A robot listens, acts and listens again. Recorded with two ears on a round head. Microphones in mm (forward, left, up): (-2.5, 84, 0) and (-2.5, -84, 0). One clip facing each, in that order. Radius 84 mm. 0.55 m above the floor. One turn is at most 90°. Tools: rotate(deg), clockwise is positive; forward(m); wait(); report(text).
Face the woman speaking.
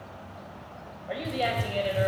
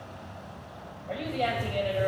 rotate(-20)
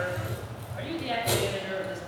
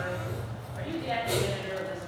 rotate(-90)
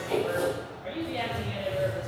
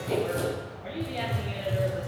report("Facing the woman speaking.")